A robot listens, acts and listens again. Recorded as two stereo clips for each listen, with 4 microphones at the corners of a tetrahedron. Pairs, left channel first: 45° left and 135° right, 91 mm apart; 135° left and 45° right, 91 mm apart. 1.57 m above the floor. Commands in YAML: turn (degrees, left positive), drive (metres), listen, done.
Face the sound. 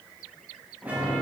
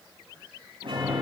turn: -60
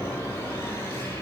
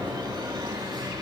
turn: -15
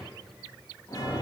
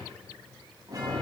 done: "Found it: a chime, straight ahead, over 4 m away."